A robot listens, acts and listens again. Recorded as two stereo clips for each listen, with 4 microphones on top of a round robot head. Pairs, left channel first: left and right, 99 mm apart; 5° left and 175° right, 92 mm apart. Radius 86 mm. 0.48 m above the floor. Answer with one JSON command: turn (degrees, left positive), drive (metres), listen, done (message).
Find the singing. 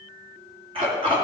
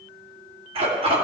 {"listen": true}
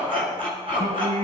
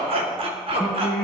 {"turn": -80}
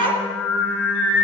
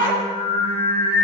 {"turn": 20}
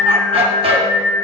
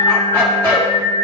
{"turn": 10}
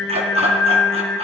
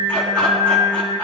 {"done": "Found it: singing, straight ahead."}